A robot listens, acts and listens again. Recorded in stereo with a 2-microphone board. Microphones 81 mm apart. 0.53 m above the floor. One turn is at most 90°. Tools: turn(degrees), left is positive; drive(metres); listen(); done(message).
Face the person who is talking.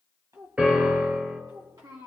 turn(degrees=-55)
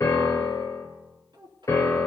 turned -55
turn(degrees=-65)
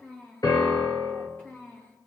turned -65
turn(degrees=25)
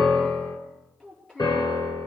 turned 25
turn(degrees=15)
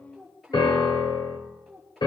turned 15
done("Found it: a child speaking, straight ahead, over 4 m away.")